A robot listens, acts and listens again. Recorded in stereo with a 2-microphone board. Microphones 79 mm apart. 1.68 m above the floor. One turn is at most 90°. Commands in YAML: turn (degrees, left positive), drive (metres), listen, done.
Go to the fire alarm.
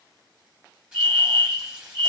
turn: -70
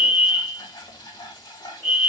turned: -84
drive: 1.0
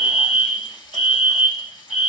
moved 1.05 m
drive: 1.0
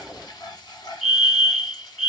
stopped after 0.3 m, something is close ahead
done: "I am next to the fire alarm."